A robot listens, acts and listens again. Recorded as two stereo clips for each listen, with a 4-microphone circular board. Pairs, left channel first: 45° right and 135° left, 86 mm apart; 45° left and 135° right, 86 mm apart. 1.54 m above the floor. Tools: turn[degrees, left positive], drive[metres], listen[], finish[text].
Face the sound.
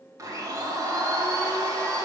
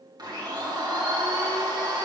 Thought: The blender: 175° right.
Action: turn[-175]
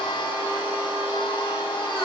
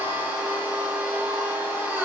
Thought: The blender is now 65° right.
Action: turn[-65]
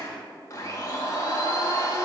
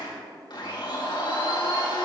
Thought: The blender is now 10° left.
Action: turn[10]
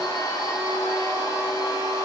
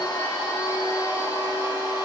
Action: finish[Facing the blender.]